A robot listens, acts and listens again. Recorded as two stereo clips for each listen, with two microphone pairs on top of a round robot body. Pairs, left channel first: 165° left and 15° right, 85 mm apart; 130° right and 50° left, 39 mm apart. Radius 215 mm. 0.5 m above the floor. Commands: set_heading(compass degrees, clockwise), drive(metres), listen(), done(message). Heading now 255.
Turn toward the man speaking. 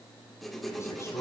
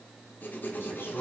set_heading(35)
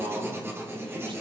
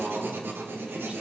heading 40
listen()
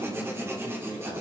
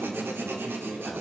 listen()
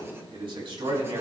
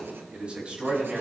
set_heading(55)
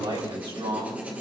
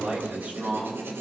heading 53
set_heading(63)
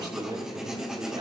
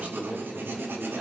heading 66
done("Facing the man speaking.")